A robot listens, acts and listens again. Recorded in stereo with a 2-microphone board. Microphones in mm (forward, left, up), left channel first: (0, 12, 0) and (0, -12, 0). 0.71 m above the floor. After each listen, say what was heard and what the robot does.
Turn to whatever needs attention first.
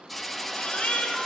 The baby crying: about 55° left or 125° left. Turn 55° left.
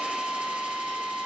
Keep listening.
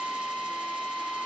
Keep listening.
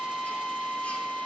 I heard a baby crying, but can't make it out now. It was about straight ahead or 70° left.